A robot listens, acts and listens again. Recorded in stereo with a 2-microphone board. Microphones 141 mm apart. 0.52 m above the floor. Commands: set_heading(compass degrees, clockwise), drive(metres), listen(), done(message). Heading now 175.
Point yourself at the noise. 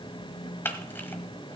set_heading(160)
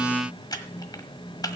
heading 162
set_heading(12)
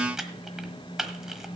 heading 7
done("Found it: a camera shutter, straight ahead.")